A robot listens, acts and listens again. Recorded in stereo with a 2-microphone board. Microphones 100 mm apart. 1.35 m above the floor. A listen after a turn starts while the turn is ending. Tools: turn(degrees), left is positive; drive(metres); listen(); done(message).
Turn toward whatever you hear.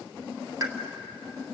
turn(degrees=-40)
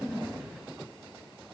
listen()
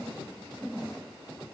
done("I heard a pop, but can't make it out now. It was about straight ahead or 100° right.")